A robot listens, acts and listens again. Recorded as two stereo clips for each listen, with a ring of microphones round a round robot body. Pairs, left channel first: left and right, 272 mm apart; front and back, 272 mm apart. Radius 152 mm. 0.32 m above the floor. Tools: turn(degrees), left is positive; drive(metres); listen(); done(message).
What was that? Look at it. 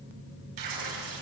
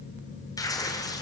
turn(degrees=-80)
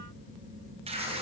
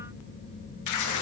turn(degrees=-20)
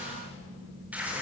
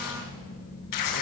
done("Facing the tearing paper, 2 to 4 m away.")